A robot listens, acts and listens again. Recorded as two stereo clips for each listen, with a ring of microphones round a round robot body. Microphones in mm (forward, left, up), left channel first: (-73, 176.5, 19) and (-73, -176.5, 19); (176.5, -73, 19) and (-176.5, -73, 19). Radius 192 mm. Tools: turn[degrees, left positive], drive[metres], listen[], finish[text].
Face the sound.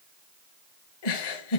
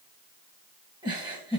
Thought: The giggle: 100° left.
Action: turn[100]
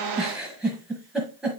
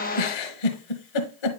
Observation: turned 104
Action: finish[Found it: a giggle, straight ahead.]